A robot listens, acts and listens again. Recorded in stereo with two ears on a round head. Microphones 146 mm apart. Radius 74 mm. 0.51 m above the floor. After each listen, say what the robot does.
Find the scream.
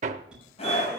Turn 40° left.
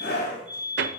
Turn 95° left.
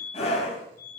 Turn 45° left.
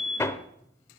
Keep listening.
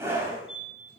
Turn 15° right.
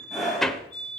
Found it: a scream, straight ahead.